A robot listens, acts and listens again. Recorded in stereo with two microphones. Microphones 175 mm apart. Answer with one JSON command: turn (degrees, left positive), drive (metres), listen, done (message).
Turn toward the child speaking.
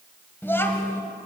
{"turn": 15}
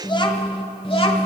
{"turn": 35}
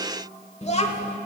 {"turn": 35}
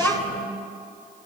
{"done": "Facing the child speaking."}